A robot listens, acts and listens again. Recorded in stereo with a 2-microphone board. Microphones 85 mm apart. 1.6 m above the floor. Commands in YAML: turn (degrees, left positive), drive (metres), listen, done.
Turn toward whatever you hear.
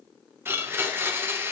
turn: -30
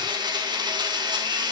turn: -120
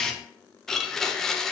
done: "Found it: a blender, straight ahead."